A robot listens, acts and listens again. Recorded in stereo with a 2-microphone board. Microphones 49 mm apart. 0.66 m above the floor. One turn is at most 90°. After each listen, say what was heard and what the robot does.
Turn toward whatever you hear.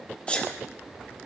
The sneeze: about 25° left or 155° left. Turn 25° left.
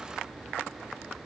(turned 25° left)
Keep listening.
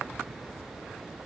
I heard a sneeze, but can't make it out now. It was about straight ahead or 130° left.